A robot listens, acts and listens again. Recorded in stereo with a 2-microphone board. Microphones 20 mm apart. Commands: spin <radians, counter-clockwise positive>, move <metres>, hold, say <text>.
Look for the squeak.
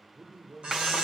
spin -1.57
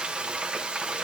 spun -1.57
hold
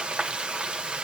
hold
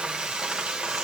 say Facing where the squeak came from. I can't hear it now.